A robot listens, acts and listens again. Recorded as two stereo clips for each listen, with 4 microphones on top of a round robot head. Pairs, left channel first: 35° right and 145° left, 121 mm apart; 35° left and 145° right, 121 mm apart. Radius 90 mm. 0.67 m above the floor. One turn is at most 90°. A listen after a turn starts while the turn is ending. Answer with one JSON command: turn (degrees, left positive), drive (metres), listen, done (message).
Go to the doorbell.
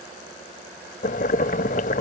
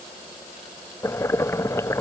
{"listen": true}
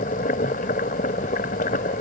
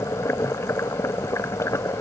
{"listen": true}
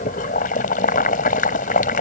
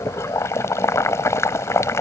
{"done": "I can't make out a doorbell, only boiling."}